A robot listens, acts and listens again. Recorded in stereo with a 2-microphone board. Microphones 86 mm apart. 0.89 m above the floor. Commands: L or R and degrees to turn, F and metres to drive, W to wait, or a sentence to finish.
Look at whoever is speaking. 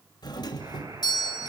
W
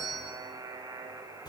W
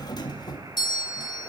I can't make out anyone speaking to turn to.